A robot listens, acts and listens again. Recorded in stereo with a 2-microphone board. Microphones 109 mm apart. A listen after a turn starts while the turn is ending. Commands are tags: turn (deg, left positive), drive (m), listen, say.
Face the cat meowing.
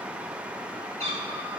<turn deg="-90"/>
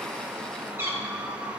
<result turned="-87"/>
<turn deg="-25"/>
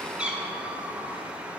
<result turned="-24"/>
<turn deg="-10"/>
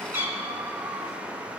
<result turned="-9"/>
<turn deg="-25"/>
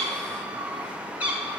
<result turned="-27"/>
<turn deg="-15"/>
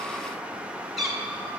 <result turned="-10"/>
<say>Found it: a cat meowing, straight ahead, 1 to 2 m away.</say>